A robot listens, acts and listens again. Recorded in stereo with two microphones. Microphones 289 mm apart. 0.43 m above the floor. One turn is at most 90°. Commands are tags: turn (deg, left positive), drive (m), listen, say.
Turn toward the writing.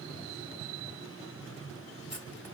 <listen/>
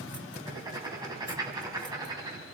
<turn deg="-30"/>
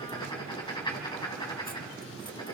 <turn deg="15"/>
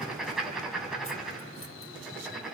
<say>Found it: writing, straight ahead.</say>